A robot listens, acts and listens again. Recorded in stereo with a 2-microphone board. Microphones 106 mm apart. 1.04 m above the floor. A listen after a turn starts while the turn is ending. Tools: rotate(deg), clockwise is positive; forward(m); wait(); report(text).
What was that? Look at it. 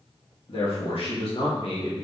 rotate(-65)
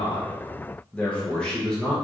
report("Found it: a man speaking, straight ahead.")